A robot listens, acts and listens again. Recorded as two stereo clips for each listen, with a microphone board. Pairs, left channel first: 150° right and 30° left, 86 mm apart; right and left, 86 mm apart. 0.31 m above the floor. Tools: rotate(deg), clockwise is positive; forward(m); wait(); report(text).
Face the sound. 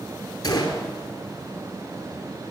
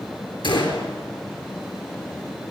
rotate(110)
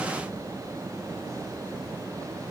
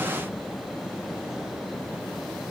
report("I heard a gunshot from this way, but can't make it out now.")